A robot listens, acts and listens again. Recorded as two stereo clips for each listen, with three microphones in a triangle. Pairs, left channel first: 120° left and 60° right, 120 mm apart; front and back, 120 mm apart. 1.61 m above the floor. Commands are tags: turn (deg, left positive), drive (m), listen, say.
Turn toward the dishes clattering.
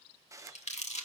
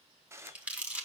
<turn deg="-115"/>
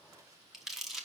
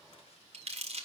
<listen/>
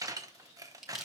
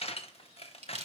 <say>Found it: dishes clattering, straight ahead.</say>